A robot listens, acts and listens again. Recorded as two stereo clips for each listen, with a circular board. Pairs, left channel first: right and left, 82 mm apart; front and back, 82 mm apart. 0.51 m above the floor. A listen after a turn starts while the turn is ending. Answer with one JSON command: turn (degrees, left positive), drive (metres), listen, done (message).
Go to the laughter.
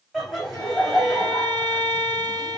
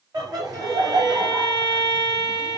{"turn": 180}
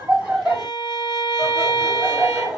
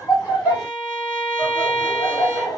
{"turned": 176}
{"drive": 1.0}
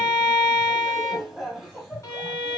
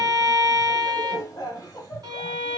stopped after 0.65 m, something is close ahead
{"done": "Arrived at the laughter, straight ahead."}